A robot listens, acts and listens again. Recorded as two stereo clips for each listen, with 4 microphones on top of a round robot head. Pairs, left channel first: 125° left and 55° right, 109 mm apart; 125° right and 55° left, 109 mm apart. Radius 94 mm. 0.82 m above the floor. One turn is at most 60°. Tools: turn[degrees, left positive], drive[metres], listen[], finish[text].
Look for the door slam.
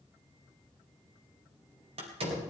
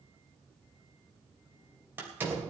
Thought: The door slam: 20° right.
Action: turn[-20]
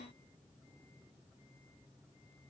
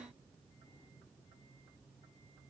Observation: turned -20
Action: finish[I heard a door slam from this way, but can't make it out now.]